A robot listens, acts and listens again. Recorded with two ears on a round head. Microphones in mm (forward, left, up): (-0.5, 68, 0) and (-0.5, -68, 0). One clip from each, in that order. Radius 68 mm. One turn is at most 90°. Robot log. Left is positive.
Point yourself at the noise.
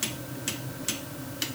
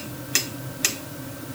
cmd idle
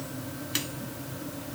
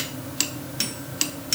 cmd idle
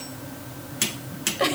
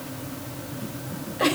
cmd yaw +90
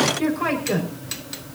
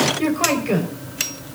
note: So it is at 10° right.
cmd yaw -10
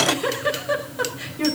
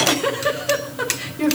end: Found it: a giggle, straight ahead, over 4 m away.